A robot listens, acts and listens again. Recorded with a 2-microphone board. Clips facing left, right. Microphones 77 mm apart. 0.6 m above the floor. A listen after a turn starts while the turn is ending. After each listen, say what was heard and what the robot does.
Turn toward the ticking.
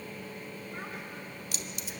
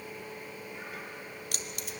Keep listening.
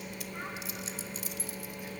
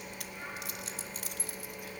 Keep listening.
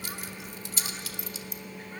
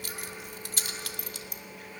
I can't make out ticking, only keys jangling.